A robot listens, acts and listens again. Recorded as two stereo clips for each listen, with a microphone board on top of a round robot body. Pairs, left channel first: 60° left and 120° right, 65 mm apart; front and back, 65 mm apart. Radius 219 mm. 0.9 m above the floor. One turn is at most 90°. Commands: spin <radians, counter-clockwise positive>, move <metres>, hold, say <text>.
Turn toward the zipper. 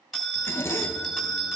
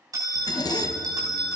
spin 0.17
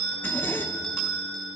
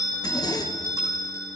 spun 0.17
say Facing the zipper, 1 to 2 m away.